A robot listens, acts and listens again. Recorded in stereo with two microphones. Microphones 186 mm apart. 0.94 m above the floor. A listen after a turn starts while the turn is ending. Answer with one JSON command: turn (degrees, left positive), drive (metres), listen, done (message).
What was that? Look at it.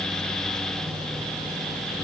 {"listen": true}
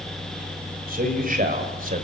{"turn": -50}
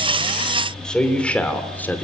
{"turn": 10}
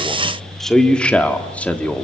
{"turn": 10}
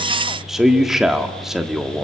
{"done": "Found it: a man speaking, straight ahead, 1 to 2 m away."}